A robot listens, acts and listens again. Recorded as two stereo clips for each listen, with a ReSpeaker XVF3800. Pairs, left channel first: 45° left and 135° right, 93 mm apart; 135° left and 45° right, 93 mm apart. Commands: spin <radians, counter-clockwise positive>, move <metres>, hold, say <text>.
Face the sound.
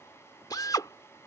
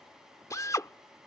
spin 1.48
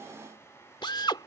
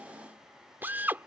spin 0.35
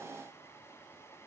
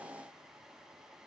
hold
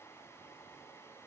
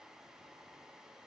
hold
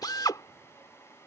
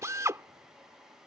say Found it: a drill, straight ahead.